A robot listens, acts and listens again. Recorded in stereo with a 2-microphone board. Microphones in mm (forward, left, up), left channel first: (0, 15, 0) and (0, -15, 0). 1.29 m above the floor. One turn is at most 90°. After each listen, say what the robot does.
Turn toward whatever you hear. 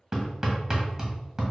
Turn 25° right.
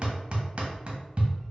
Turn 90° right.
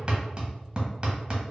Turn 30° right.
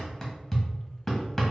Turn 20° left.
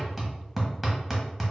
Facing the hammering.